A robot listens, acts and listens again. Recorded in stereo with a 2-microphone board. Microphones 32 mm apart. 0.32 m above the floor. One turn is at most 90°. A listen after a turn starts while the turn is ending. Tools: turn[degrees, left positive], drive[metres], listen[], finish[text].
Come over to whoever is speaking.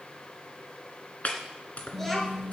Action: turn[30]
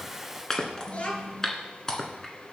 Thought: So it is at 140° left.
Action: turn[90]
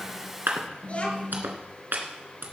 Thought: The child speaking is now 40° left.
Action: turn[40]
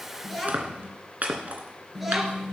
Action: drive[1.0]
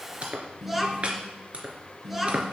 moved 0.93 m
Action: drive[1.0]
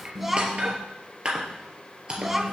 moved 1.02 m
Thought: The child speaking is now 10° right.
Action: turn[-10]
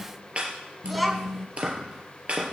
Action: drive[1.0]
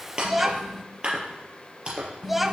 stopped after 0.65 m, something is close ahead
Thought: The child speaking is now 10° right.
Action: turn[-10]
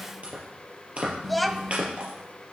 Action: finish[I am next to the child speaking.]